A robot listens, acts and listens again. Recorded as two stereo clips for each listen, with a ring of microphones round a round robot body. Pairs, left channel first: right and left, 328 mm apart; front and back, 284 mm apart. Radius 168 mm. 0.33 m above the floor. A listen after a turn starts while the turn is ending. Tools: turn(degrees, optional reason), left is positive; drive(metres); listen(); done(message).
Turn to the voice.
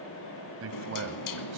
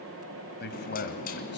turn(degrees=45, reason="The man speaking: 45° left.")
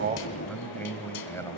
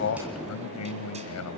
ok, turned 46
turn(degrees=-10, reason="The man speaking is now 10° right.")
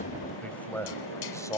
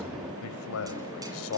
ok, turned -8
turn(degrees=-15, reason="The man speaking is now 15° right.")
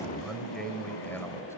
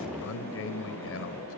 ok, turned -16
turn(degrees=-10, reason="The man speaking is now 10° right.")
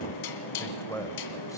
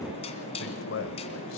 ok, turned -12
turn(degrees=-10, reason="The man speaking is now 10° right.")
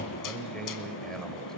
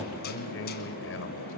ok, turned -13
done("Facing the man speaking.")